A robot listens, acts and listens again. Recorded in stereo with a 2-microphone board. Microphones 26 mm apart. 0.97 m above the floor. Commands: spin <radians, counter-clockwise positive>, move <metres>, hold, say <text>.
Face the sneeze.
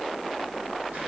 hold
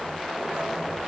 hold
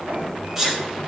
spin -0.26
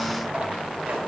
hold
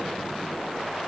say I heard a sneeze, but can't make it out now. It was about straight ahead or 150° right.